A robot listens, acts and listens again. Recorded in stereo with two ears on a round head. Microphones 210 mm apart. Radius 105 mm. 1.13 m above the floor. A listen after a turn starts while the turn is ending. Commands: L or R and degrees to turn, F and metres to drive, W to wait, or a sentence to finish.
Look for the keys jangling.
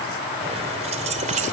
R30
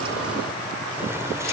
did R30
W
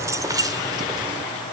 R15
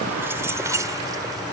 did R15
R20
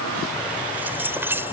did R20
R10
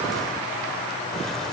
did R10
W
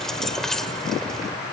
Found it: keys jangling, straight ahead.